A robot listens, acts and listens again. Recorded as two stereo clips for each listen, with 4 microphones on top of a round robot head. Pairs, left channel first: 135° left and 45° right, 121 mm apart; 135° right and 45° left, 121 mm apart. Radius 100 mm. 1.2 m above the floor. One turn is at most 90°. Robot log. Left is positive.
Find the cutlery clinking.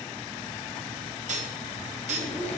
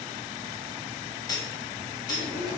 note: The cutlery clinking: 75° right.
cmd yaw -75
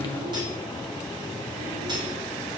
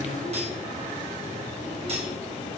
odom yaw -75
cmd idle
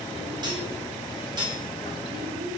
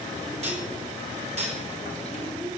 note: The cutlery clinking is now 10° left.
cmd yaw +10
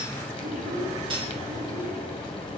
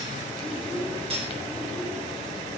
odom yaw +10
end: Found it: cutlery clinking, straight ahead, 1 to 2 m away.